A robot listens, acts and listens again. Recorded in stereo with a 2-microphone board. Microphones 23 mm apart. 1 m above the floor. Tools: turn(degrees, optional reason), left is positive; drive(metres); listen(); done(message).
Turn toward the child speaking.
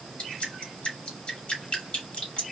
listen()
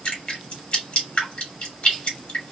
listen()
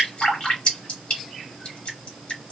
done("I can't make out a child speaking, only dripping.")